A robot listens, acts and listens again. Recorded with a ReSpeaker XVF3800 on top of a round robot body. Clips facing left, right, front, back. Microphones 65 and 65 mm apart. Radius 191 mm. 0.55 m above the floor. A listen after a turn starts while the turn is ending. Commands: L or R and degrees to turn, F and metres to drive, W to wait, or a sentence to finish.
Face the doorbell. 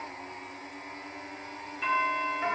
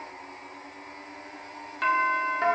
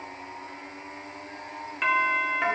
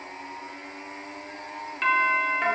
R85
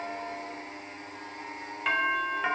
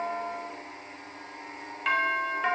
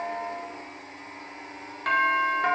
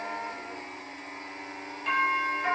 Found it: a doorbell, straight ahead.